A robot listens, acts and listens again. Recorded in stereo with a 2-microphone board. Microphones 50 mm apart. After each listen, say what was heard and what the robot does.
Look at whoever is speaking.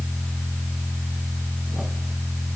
Keep listening.
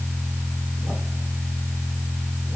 Keep listening.
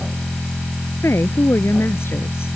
The woman speaking: about 55° left or 125° left. Turn 55° left.
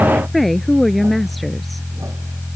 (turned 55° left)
Found it: a woman speaking, straight ahead.